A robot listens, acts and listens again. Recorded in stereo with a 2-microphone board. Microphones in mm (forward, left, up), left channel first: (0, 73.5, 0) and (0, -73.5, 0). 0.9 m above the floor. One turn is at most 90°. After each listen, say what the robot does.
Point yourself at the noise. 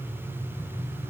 Keep listening.
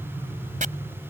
Turn 60° right.
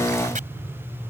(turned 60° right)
Keep listening.
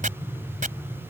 Turn 60° right.
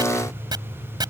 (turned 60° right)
Turn 30° right.
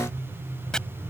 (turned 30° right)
Keep listening.
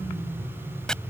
Facing the chopping.